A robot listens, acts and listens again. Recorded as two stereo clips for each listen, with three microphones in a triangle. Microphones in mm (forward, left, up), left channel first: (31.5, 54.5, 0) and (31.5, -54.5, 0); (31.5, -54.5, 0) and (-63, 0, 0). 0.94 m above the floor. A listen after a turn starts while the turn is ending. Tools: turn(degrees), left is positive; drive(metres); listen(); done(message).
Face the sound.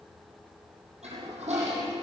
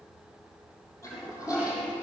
turn(degrees=-90)
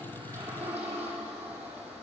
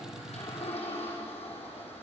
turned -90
turn(degrees=-15)
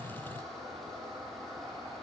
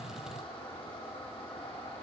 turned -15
done("Found it: a toilet flushing, straight ahead.")